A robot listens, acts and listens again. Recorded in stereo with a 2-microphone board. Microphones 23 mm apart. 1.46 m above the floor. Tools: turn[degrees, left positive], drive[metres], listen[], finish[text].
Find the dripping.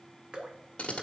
Thought: The dripping: about 45° right or 135° right.
Action: turn[-45]
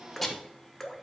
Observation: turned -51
Action: finish[Found it: dripping, straight ahead.]